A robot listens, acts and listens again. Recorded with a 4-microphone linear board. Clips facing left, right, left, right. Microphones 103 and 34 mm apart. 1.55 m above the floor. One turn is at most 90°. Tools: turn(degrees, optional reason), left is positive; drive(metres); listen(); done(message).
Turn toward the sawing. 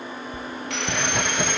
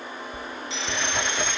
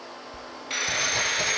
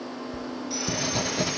turn(degrees=55, reason="The sawing: about 55° left or 125° left.")
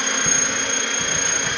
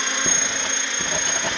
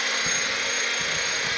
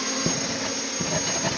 turn(degrees=60, reason="So it is at 60° left.")
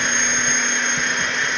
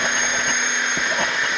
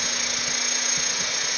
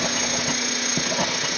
done("Facing the sawing.")